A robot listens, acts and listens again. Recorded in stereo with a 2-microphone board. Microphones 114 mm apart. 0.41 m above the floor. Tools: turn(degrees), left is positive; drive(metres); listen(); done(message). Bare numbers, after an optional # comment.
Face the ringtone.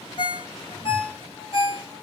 # The ringtone: about 55° left or 125° left.
turn(55)
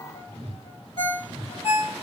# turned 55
# So it is at 65° left.
turn(65)
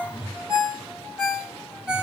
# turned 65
# The ringtone is now 10° right.
turn(-10)
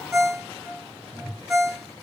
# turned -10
done("Found it: a ringtone, straight ahead.")